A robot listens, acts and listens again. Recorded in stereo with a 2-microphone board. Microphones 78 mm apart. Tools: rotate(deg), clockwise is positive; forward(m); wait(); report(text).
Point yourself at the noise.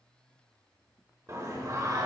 rotate(50)
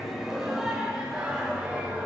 rotate(15)
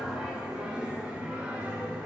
rotate(15)
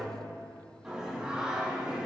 report("Found it: singing, straight ahead, over 4 m away.")